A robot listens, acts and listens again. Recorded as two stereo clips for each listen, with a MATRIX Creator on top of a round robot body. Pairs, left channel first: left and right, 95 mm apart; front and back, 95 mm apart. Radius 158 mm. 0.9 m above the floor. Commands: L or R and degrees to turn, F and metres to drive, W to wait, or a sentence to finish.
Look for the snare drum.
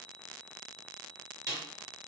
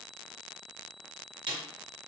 R145
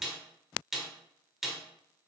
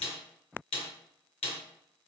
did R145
Found it: a snare drum, straight ahead, 1 to 2 m away.